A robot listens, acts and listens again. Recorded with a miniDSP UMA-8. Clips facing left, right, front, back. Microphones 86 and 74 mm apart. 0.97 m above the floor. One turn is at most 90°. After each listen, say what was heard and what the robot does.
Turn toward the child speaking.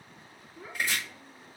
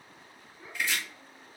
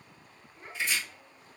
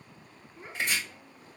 The child speaking: 105° left. Turn 90° left.
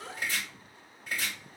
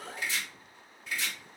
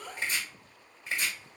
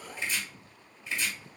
The child speaking is now 10° left. Turn 10° left.
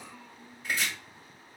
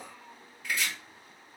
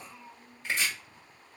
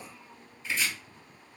Found it: a child speaking, straight ahead.